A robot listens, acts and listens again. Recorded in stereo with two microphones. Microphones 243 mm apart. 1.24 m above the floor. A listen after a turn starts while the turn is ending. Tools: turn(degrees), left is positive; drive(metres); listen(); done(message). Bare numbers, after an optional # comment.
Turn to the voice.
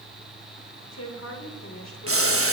turn(90)
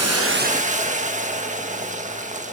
listen()
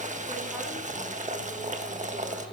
listen()
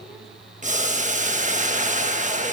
done("I heard a woman speaking from this way, but can't make it out now.")